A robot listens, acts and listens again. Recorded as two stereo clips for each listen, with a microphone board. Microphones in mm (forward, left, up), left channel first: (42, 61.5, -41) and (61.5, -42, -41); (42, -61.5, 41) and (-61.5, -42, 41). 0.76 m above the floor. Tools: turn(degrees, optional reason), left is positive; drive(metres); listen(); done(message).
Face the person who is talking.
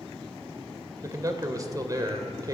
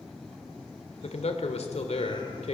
turn(degrees=-20, reason="The man speaking: 20° right.")
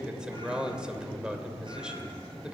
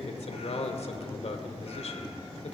done("Found it: a man speaking, straight ahead.")